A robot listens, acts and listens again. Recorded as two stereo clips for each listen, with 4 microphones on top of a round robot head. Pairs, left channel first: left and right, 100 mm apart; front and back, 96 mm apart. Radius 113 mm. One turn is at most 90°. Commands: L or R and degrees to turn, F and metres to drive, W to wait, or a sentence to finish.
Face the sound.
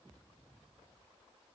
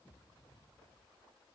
W
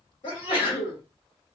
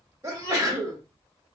L90
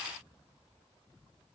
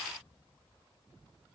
L40
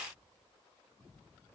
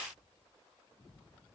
I heard a sneeze from this way, but can't make it out now.